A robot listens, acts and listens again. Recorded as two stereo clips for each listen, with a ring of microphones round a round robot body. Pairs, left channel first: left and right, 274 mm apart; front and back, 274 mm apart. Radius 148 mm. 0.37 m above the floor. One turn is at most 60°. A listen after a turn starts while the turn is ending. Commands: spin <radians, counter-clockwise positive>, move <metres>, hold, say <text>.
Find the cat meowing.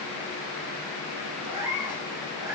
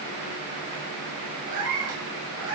spin -1.05
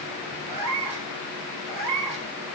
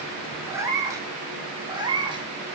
spin -1.05
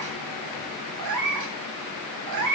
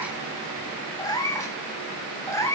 spin -1.05
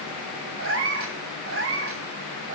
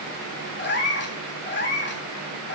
spin -0.87
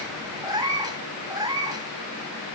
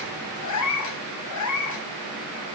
spin -0.26
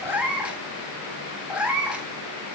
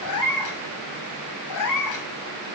say Facing the cat meowing, 1 to 2 m away.